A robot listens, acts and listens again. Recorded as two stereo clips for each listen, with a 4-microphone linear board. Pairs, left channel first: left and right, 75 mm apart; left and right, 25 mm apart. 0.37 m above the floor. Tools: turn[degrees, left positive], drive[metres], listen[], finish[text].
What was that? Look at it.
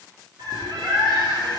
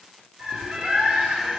Action: turn[-90]
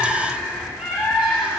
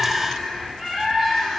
Thought: So it is at 15° right.
Action: turn[-15]
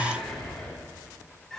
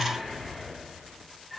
Action: finish[Found it: a bird, straight ahead.]